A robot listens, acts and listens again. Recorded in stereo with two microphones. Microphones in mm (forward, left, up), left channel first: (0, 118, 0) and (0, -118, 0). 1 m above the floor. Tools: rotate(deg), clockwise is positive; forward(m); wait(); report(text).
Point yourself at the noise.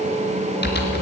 rotate(-45)
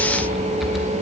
report("Facing the typing on a keyboard.")